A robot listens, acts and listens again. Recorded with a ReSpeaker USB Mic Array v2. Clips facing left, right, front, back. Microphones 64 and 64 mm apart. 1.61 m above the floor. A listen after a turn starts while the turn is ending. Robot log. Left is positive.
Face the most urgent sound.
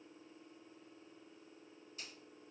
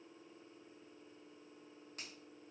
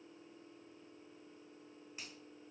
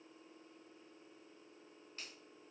cmd idle
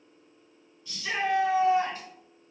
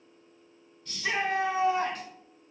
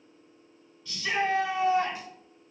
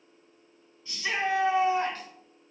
note: The shout: 115° right.
cmd yaw -115
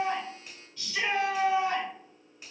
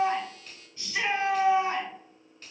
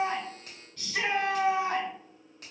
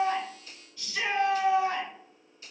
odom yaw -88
note: The shout is now 25° right.
cmd yaw -25
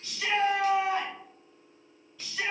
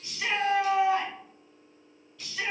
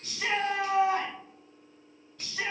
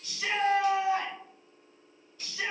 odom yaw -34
end: Found it: a shout, straight ahead, 1 to 2 m away.